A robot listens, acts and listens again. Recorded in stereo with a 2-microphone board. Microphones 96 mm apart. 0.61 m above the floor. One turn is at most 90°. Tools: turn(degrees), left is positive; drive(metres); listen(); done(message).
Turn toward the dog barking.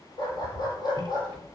turn(degrees=45)
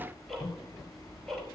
listen()
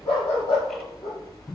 turn(degrees=85)
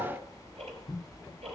listen()
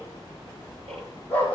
turn(degrees=15)
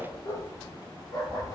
done("Facing the dog barking.")